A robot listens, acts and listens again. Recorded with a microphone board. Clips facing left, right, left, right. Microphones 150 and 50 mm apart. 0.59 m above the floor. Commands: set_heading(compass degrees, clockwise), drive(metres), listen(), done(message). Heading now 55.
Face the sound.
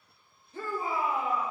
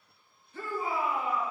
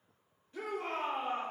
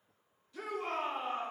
set_heading(20)
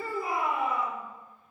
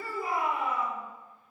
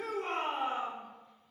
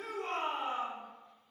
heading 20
set_heading(275)
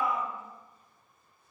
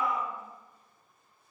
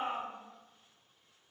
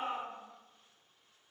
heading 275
done("Facing the shout, 1 to 2 m away.")